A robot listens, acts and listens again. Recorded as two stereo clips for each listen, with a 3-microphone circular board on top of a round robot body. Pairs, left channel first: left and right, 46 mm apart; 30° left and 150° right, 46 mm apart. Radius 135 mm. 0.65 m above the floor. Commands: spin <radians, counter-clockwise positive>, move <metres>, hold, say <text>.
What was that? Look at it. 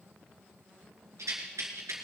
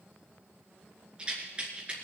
spin -1.40
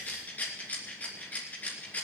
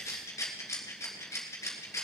spin 0.61
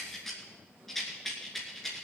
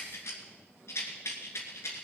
say Found it: a rattle, straight ahead, 2 to 4 m away.